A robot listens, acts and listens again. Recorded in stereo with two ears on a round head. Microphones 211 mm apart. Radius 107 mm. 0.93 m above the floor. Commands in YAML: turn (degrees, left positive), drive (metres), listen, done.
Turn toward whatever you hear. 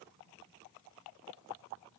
listen: true
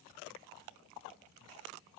listen: true
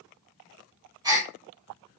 turn: -15
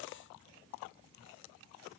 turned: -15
listen: true
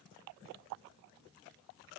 done: "I heard a gasp, but can't make it out now. It was about straight ahead or 150° right."